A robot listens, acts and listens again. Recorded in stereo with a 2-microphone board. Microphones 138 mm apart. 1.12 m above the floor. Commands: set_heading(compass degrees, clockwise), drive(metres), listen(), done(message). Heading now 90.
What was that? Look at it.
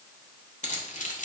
set_heading(25)
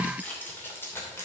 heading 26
set_heading(6)
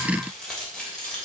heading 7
done("Found it: keys jangling, straight ahead.")